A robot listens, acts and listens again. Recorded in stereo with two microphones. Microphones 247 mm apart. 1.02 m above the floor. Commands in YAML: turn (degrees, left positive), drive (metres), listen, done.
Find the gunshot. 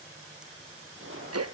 turn: -55
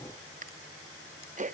listen: true
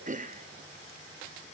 done: "I heard a gunshot, but can't make it out now. It was about straight ahead or 70° right."